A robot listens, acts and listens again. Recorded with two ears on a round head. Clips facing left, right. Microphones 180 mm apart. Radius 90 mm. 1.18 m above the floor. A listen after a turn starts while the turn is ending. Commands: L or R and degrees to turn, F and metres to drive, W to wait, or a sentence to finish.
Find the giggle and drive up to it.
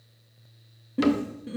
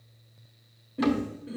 L70
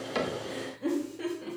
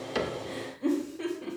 F1.0
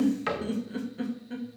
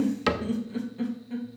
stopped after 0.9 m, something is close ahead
L10
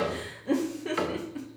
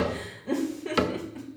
Arrived at the giggle, straight ahead.